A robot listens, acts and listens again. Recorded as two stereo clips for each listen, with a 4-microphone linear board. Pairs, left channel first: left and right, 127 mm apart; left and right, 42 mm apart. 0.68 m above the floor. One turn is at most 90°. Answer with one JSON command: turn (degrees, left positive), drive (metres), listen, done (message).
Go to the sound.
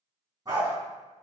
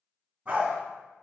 {"turn": -30}
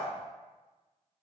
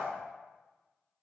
{"listen": true}
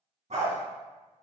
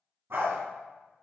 {"turn": -90}
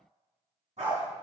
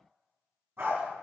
{"turn": -65}
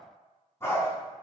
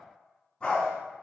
{"turn": 20}
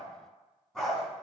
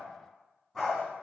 {"drive": 1.0}
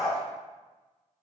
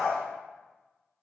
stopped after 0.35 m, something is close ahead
{"done": "Something is in my way. I am facing the dog barking but have not reached it."}